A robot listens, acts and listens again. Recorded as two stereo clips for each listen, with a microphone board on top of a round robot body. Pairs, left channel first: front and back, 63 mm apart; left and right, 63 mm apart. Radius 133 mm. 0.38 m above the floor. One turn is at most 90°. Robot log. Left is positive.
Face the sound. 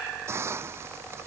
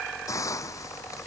note: The hiss: 130° left.
cmd yaw +90
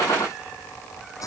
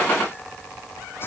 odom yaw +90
note: The hiss is now 35° left.
cmd yaw +35
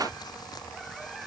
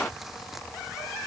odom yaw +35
cmd idle
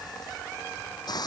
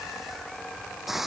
end: Found it: a hiss, straight ahead.